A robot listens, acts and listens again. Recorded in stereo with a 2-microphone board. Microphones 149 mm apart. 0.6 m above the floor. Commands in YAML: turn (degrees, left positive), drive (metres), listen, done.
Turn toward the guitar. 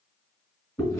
listen: true
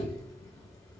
listen: true
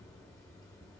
done: "I can't make out a guitar to turn to."